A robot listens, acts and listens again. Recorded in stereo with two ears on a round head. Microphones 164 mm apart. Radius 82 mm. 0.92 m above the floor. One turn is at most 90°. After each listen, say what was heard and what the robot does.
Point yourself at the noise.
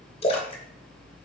The splash: about 35° left or 145° left. Turn 35° left.
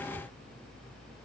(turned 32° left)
Keep listening.
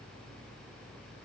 I heard a splash, but can't make it out now. It was about 5° left or 115° left.